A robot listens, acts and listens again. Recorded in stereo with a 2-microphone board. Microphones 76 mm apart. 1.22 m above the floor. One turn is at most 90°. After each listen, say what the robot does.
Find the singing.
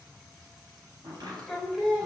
Turn 30° right.
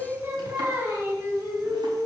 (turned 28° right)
Turn 90° right.
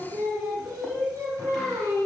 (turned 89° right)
Turn 35° right.
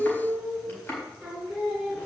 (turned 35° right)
Found it: singing, straight ahead.